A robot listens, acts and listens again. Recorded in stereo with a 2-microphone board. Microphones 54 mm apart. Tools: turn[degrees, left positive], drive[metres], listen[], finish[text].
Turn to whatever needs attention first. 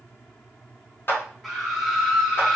Action: turn[30]
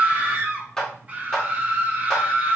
Thought: So it is at 30° right.
Action: turn[-30]
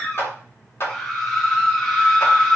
Thought: The scream is now 10° left.
Action: turn[10]
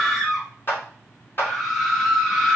Action: finish[Found it: a scream, straight ahead.]